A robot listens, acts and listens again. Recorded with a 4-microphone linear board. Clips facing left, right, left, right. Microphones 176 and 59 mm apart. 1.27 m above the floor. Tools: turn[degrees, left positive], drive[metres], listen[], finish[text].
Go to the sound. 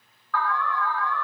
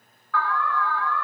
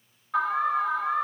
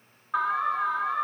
Action: turn[-30]
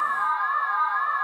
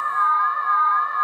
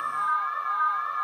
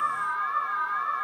Thought: So it is at 135° right.
Action: turn[-135]
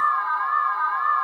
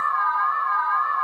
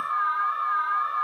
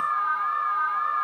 Thought: The alarm is now 10° right.
Action: turn[-10]
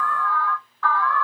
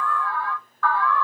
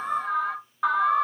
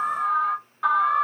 Action: drive[1.0]
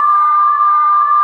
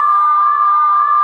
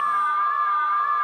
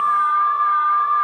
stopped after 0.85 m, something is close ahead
Action: finish[I am next to the alarm.]